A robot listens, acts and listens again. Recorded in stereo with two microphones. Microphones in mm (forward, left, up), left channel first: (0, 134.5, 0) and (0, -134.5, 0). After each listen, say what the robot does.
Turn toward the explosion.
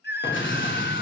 Turn 45° left.
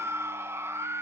Keep listening.
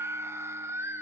I heard an explosion, but can't make it out now. It was about straight ahead or 90° left.